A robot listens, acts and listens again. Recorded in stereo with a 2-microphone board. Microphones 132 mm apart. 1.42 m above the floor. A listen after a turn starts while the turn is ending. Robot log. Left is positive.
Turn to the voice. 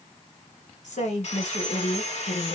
note: The woman speaking: about 75° left or 105° left.
cmd yaw +75
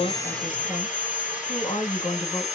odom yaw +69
note: So it is at 35° left.
cmd yaw +35
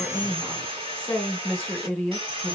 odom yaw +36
end: Facing the woman speaking, 1 to 2 m away.